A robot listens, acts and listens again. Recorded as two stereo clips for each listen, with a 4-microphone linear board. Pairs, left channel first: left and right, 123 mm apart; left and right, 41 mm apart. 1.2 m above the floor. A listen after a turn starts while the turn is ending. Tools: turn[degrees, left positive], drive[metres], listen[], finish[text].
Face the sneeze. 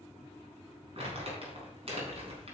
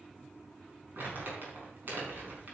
Action: listen[]
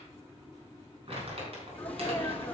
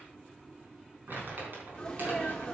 Action: turn[30]
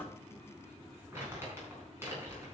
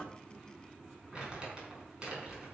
Action: listen[]
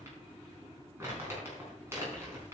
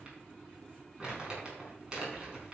Action: finish[I heard a sneeze, but can't make it out now. It was about 20° right or 140° left.]